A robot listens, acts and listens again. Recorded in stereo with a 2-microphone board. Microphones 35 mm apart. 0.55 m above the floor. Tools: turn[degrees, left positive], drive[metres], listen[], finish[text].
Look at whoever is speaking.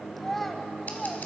Action: turn[30]
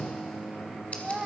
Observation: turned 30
Thought: So it is at 20° right.
Action: turn[-20]
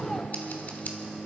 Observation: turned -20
Action: listen[]
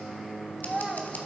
Action: finish[Facing the child speaking, 1 to 2 m away.]